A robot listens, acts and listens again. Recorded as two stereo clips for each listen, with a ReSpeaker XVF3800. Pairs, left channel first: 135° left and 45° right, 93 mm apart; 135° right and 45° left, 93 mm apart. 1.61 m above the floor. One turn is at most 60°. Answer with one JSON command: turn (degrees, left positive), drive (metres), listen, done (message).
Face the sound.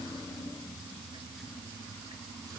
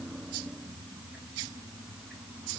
{"listen": true}
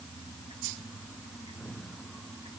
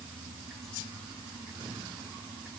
{"listen": true}
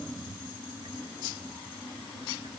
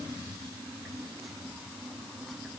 {"done": "I can't make out anything."}